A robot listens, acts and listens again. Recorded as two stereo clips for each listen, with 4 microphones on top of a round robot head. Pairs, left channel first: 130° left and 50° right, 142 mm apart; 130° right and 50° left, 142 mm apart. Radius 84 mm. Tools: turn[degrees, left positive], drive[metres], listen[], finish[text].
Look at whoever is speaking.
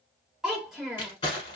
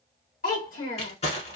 Thought: The child speaking: 140° right.
Action: turn[-140]
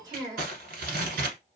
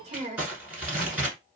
Thought: The child speaking is now 10° left.
Action: turn[10]
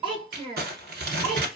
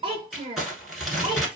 Action: finish[Found it: a child speaking, straight ahead.]